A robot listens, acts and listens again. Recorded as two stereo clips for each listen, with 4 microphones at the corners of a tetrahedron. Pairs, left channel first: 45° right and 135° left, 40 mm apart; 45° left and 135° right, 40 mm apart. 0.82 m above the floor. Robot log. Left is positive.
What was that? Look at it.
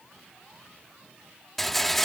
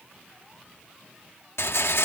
note: The rattle: 40° left.
cmd yaw +40
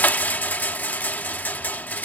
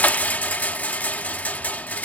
end: Facing the rattle.